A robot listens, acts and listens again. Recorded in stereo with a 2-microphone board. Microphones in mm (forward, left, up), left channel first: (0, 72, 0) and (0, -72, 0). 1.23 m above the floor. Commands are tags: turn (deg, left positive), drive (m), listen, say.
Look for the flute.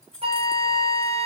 <turn deg="-40"/>
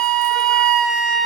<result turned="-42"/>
<say>Found it: a flute, straight ahead, 1 to 2 m away.</say>